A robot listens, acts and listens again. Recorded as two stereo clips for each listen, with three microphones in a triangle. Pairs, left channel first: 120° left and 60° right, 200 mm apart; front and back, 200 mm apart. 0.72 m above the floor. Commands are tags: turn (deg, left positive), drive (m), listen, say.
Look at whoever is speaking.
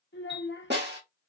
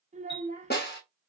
<turn deg="125"/>
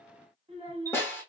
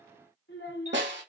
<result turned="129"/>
<say>Facing the child speaking, 1 to 2 m away.</say>